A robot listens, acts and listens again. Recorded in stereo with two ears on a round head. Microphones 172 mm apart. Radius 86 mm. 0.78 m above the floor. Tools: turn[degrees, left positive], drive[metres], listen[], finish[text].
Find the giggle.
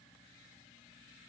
Action: listen[]
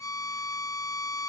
Action: listen[]
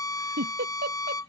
Thought: The giggle: about 50° right or 130° right.
Action: turn[-50]
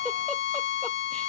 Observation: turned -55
Action: listen[]
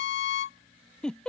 Action: finish[Found it: a giggle, straight ahead.]